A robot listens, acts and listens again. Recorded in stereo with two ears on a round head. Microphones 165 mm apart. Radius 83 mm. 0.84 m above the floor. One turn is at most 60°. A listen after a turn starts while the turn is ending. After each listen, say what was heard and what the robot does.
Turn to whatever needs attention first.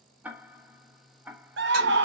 The scream: about 65° right or 115° right. Turn 60° right.
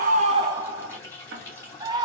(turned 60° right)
So it is at 25° right. Turn 25° right.
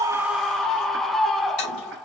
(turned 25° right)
Found it: a scream, straight ahead, under 1 m away.